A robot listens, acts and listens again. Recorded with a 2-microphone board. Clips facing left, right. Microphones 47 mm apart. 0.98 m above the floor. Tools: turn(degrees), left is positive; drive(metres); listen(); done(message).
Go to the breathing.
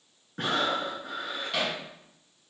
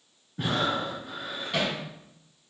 turn(degrees=70)
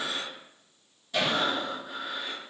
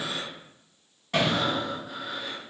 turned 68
drive(metres=1.0)
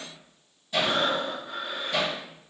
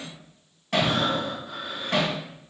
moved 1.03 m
drive(metres=1.0)
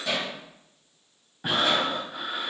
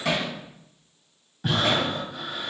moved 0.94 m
turn(degrees=15)
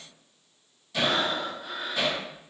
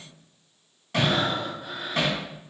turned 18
drive(metres=1.0)
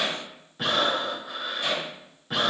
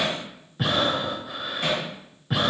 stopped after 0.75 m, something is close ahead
done("Arrived at the breathing, straight ahead.")